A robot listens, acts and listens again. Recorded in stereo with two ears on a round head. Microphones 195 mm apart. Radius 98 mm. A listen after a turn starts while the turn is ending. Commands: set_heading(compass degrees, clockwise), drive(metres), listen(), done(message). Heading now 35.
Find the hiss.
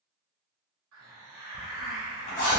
set_heading(100)
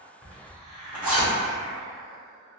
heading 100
done("Facing the hiss.")